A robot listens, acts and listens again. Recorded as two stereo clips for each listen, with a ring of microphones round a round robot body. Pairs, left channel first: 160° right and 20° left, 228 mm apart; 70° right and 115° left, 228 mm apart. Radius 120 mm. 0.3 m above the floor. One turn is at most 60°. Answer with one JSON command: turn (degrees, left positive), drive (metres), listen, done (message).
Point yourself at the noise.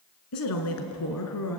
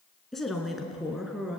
{"turn": -60}
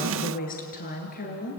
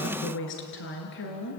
{"turn": -60}
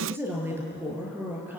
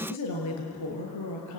{"turn": -60}
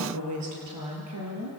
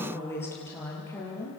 {"turn": 10}
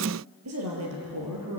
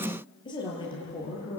{"done": "Facing the woman speaking."}